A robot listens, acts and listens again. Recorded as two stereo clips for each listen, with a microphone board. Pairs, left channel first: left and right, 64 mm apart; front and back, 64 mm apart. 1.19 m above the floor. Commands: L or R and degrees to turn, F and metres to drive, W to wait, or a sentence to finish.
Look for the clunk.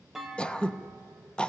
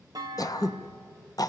R175
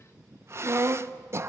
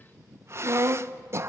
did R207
L35
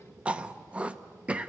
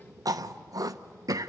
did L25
L10
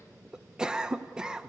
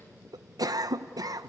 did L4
I heard a clunk from this way, but can't make it out now.